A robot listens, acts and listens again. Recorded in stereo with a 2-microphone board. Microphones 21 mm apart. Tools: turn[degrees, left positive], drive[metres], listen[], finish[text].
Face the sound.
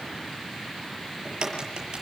Thought: The crack: about 40° right or 140° right.
Action: turn[-40]
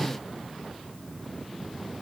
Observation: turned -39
Action: listen[]
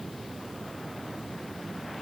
Action: finish[I heard a crack, but can't make it out now. It was about straight ahead or 105° right.]